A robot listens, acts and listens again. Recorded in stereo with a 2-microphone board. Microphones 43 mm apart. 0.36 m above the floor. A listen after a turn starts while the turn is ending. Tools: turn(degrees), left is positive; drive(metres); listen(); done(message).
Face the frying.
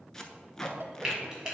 turn(degrees=-30)
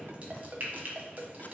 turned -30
turn(degrees=-135)
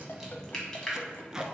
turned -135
turn(degrees=15)
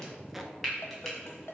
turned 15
done("Found it: frying, straight ahead.")